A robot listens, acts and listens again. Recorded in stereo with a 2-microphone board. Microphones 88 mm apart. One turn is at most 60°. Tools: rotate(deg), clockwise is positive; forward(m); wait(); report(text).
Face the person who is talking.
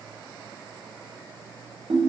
wait()
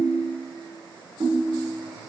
wait()
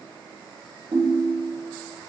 report("I can't make out anyone speaking, only a ringtone.")